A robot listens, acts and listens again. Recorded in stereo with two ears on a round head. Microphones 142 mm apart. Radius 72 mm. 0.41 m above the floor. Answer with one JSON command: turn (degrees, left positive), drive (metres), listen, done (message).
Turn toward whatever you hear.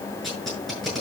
{"turn": 30}
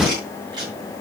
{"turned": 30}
{"turn": -30}
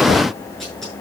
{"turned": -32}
{"done": "Found it: tape being pulled, straight ahead."}